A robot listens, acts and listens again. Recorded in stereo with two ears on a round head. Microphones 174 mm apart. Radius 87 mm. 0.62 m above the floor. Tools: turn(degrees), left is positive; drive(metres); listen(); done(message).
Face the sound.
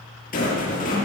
turn(degrees=45)
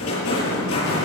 turn(degrees=90)
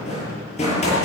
turn(degrees=35)
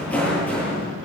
done("Found it: a rattle, straight ahead, over 4 m away.")